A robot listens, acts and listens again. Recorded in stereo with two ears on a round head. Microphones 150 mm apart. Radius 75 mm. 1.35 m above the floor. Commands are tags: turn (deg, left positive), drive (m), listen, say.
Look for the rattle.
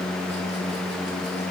<listen/>
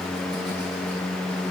<listen/>
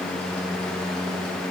<say>I can't make out a rattle to turn to.</say>